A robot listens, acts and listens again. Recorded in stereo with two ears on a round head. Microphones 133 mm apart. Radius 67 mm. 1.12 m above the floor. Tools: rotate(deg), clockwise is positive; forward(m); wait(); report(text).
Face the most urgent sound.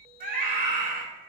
rotate(60)
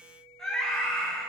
report("Found it: a scream, straight ahead.")